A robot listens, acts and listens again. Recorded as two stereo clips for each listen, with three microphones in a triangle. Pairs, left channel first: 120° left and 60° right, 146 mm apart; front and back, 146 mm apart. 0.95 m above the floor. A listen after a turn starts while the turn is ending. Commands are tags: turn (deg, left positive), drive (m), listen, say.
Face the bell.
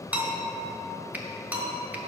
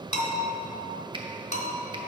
<turn deg="15"/>
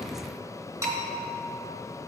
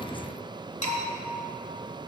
<say>Found it: a bell, straight ahead, 1 to 2 m away.</say>